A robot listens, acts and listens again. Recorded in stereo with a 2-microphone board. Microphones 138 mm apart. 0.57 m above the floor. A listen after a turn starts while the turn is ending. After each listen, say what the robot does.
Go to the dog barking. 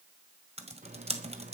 Keep listening.
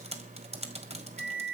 Keep listening.
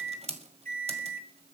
I can't make out a dog barking to turn to.